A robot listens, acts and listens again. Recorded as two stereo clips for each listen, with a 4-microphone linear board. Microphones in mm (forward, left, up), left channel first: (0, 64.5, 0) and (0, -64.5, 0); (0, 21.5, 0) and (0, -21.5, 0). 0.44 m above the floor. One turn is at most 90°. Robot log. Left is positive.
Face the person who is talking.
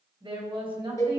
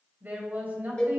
note: The woman speaking: about 40° right or 140° right.
cmd yaw -40
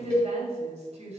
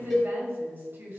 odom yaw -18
note: So it is at 130° right.
cmd yaw -90
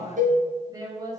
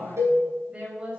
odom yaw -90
note: The woman speaking is now 30° right.
cmd yaw -30
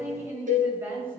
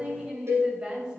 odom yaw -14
note: The woman speaking is now 15° right.
cmd yaw -15
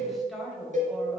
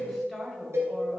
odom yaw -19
end: Facing the woman speaking, 1 to 2 m away.